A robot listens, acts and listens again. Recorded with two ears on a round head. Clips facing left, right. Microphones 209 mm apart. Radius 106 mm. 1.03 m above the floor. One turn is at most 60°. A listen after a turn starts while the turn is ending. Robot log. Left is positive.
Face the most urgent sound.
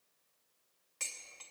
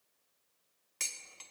cmd idle
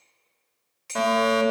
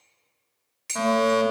note: The fire alarm: about 45° left or 135° left.
cmd yaw +45
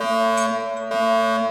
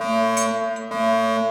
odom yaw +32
note: So it is at 15° left.
cmd yaw +15
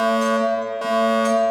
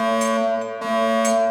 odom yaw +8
note: The fire alarm is now 10° left.
cmd yaw +10
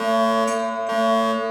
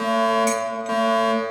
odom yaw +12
end: Found it: a fire alarm, straight ahead.